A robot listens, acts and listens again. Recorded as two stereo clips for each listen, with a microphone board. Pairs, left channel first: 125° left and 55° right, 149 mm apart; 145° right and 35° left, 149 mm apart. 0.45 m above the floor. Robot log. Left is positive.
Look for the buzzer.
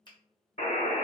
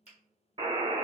note: The buzzer: 90° left.
cmd yaw +90
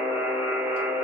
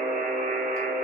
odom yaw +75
note: The buzzer is now 15° left.
cmd yaw +15
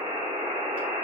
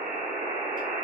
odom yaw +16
end: Found it: a buzzer, straight ahead.